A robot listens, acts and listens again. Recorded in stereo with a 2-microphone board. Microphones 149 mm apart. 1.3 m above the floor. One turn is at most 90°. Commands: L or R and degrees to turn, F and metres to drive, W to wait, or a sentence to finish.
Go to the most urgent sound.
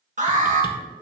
R55
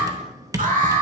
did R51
R70
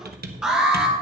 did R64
F1.0
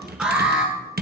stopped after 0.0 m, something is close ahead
R10
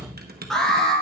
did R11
Something is in my way. I am facing the alarm but have not reached it.